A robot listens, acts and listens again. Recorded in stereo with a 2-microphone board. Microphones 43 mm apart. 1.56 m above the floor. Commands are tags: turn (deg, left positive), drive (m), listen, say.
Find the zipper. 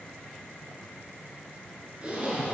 <turn deg="-30"/>
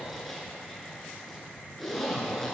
<say>Facing the zipper.</say>